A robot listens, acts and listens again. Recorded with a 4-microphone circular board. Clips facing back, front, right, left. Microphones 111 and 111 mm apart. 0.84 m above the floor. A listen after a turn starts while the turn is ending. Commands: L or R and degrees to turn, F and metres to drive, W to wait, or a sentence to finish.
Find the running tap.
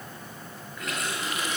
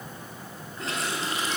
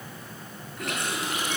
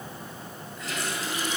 R60
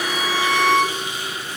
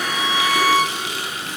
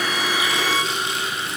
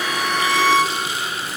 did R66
Found it: a running tap, straight ahead, over 4 m away.